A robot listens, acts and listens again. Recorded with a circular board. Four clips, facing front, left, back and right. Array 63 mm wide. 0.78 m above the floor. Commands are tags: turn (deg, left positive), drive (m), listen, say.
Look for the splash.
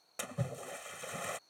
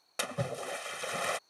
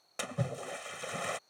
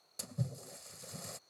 <turn deg="105"/>
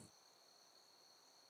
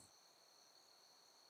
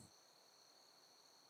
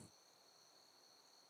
<say>I heard a splash from this way, but can't make it out now.</say>